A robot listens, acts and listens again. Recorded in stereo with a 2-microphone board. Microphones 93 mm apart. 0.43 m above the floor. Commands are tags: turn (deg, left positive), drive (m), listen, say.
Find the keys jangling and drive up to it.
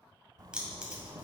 <turn deg="-30"/>
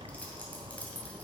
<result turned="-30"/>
<turn deg="20"/>
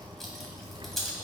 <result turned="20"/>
<drive m="1.0"/>
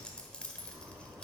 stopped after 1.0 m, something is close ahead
<turn deg="15"/>
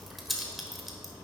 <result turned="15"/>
<say>Arrived at the keys jangling, straight ahead.</say>